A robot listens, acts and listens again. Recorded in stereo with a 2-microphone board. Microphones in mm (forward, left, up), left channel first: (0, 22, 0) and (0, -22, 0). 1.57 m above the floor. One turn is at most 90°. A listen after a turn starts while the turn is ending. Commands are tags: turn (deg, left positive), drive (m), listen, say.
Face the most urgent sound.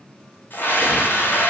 <turn deg="50"/>
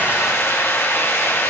<turn deg="80"/>
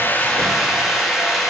<say>Found it: a scream, straight ahead.</say>